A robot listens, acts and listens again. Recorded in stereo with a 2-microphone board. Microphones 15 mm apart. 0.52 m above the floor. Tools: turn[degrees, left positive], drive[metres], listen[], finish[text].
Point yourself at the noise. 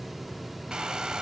Thought: The hair dryer: about 65° right or 115° right.
Action: turn[-65]
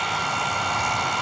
Action: finish[Found it: a hair dryer, straight ahead, 2 to 4 m away.]